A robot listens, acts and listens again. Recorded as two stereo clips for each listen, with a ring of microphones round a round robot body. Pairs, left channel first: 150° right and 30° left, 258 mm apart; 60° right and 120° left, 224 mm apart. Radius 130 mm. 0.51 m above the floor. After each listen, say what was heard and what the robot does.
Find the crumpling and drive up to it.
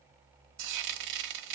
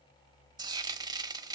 Keep listening.
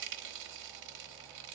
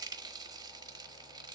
Keep listening.
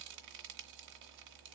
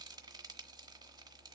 I can't make out crumpling, only frying.